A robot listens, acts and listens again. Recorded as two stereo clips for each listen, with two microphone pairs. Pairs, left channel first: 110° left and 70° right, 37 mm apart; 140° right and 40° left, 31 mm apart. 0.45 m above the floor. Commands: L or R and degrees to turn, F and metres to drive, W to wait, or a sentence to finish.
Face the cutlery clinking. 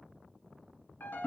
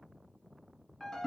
W
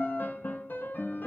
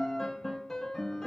W
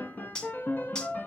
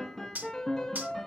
L40
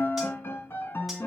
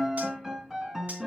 W
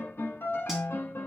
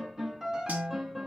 W
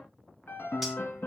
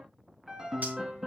I heard cutlery clinking from this way, but can't make it out now.